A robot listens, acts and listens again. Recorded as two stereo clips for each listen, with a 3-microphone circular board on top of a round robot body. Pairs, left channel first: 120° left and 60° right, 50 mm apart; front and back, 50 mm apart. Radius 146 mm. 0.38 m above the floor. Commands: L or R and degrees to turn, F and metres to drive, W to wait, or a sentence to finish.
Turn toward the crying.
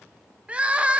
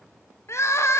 Found it: crying, straight ahead, 1 to 2 m away.